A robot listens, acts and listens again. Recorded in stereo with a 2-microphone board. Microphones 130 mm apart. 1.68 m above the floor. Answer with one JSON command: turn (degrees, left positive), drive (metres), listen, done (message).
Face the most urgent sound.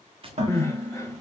{"turn": 20}
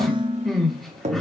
{"done": "Found it: crying, straight ahead."}